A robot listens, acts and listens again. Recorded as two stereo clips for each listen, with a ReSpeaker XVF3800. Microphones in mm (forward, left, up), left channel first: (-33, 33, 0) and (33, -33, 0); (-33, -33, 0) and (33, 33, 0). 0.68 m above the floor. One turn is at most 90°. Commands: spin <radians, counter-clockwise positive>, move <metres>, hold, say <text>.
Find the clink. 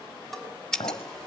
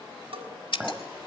spin 1.57
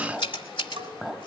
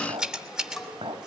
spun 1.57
spin 0.70
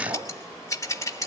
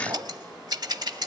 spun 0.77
hold
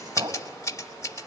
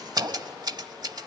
say Found it: a clink, straight ahead, 2 to 4 m away.